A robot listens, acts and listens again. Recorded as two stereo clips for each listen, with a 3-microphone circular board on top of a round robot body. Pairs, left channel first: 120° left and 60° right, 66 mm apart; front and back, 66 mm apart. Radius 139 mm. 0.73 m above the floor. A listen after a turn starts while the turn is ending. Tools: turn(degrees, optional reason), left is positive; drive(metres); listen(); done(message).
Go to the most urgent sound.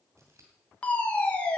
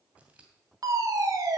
turn(degrees=-175, reason="The fire alarm: 175° right.")
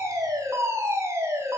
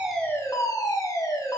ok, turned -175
turn(degrees=-20, reason="The fire alarm is now 20° right.")
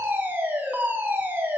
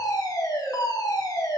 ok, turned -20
drive(metres=1.0)
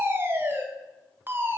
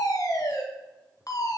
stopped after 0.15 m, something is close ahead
turn(degrees=-10, reason="The fire alarm is now 10° right.")
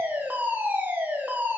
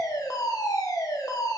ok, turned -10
done("Something is in my way. I am facing the fire alarm but have not reached it.")